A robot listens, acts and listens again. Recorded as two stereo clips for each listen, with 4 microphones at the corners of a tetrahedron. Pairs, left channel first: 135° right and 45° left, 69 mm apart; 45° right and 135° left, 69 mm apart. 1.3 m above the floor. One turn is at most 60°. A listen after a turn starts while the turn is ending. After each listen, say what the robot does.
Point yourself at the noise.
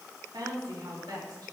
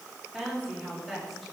Turn 45° left.
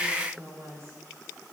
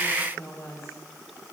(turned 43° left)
Found it: a woman speaking, straight ahead, 2 to 4 m away.